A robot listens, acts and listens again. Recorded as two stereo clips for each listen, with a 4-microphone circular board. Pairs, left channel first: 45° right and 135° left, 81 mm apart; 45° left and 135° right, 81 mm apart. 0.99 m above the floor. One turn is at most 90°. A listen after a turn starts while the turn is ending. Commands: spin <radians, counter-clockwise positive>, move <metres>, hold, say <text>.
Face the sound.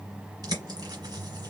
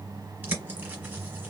spin 1.57
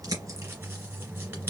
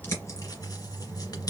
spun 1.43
spin 1.40
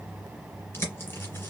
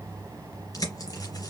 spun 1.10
spin 0.26
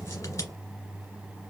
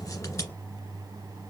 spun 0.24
say Found it: a bird, straight ahead, 2 to 4 m away.